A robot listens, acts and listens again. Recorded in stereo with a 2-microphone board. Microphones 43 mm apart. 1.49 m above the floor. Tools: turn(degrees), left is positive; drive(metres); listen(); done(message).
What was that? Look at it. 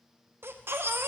turn(degrees=-65)
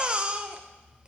turn(degrees=-30)
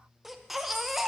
done("Found it: a baby crying, straight ahead, under 1 m away.")